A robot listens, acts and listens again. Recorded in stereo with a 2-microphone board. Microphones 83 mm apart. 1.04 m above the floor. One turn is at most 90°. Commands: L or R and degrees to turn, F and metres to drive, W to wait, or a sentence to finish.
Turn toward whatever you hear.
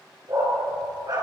R55
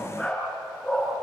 Found it: a dog barking, straight ahead, over 4 m away.